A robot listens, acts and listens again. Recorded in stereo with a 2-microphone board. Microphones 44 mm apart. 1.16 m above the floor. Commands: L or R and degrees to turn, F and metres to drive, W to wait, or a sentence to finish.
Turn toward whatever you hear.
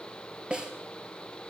R20
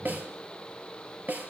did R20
R135
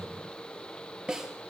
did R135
R15
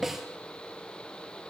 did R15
Found it: a snare drum, straight ahead.